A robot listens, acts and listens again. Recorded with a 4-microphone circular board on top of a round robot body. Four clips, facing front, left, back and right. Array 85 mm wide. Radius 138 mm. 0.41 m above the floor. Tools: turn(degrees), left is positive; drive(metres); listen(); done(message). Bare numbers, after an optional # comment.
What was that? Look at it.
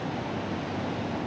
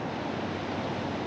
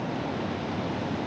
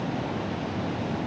listen()
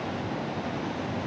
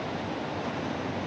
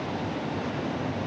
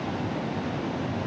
listen()
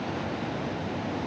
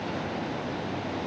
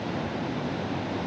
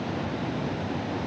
done("I can't make out anything.")